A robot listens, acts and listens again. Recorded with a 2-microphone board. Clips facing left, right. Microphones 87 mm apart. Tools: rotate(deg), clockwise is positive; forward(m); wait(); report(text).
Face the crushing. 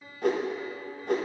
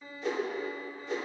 wait()
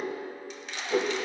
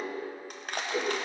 rotate(50)
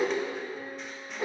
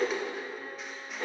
wait()
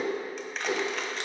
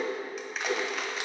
report("Found it: crushing, straight ahead.")